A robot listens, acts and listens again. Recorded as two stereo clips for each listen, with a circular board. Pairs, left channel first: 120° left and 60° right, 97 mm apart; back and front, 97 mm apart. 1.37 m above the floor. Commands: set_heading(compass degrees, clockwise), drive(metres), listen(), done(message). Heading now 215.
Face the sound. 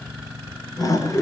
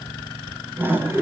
set_heading(155)
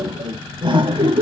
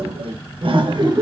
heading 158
set_heading(203)
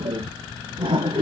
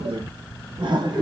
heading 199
set_heading(244)
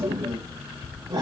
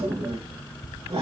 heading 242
set_heading(262)
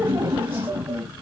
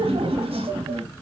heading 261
done("Found it: laughter, straight ahead, 2 to 4 m away.")